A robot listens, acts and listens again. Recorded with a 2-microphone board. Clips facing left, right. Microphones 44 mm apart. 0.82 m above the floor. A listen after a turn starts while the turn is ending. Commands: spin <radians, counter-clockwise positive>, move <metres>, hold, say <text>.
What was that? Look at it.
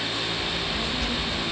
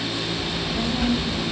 spin -0.52
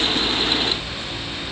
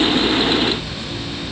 spin 0.26
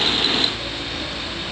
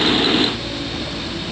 hold
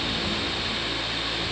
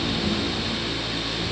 hold
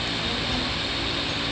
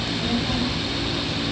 say Found it: a child speaking, straight ahead, 2 to 4 m away.